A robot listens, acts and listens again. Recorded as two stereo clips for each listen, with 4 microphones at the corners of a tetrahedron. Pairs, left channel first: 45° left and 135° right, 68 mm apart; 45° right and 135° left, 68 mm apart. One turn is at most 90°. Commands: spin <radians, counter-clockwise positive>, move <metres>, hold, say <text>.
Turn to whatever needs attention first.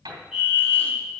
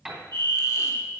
spin 1.57
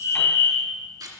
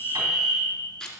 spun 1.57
spin 0.70
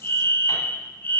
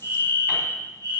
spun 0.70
say Facing the fire alarm.